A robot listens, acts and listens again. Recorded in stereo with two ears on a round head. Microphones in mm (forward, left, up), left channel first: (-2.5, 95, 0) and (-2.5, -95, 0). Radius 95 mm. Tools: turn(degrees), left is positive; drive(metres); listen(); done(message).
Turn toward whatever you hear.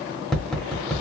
turn(degrees=30)
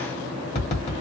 turn(degrees=145)
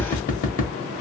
turn(degrees=40)
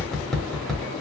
done("Found it: tapping, straight ahead, 1 to 2 m away.")